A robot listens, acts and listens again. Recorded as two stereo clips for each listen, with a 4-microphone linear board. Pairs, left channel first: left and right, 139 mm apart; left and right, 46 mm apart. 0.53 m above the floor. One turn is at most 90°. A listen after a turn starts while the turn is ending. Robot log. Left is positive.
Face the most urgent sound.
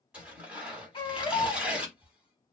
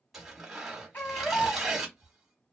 note: The baby crying: about 35° left or 145° left.
cmd yaw +35
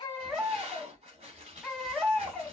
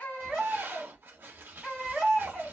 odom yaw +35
end: Facing the baby crying, 1 to 2 m away.